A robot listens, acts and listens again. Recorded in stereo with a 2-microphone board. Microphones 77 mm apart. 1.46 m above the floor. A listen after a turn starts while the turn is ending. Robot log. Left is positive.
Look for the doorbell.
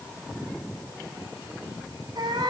cmd idle
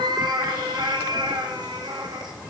cmd idle
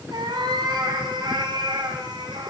end: I can't make out a doorbell to turn to.